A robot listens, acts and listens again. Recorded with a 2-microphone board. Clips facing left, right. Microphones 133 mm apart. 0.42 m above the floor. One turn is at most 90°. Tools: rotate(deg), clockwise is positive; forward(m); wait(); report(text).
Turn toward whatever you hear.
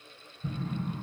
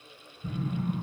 rotate(-40)
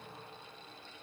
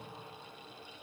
wait()
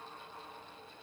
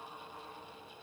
report("I heard an explosion, but can't make it out now. It was about straight ahead or 100° left.")